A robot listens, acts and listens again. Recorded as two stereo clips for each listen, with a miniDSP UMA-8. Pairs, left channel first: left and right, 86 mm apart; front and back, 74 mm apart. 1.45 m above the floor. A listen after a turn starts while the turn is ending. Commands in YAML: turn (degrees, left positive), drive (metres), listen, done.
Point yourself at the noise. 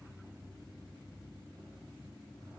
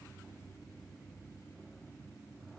listen: true
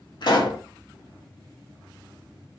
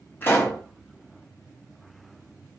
turn: 60
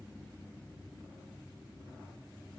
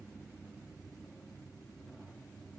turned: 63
done: "I heard a pop from this way, but can't make it out now."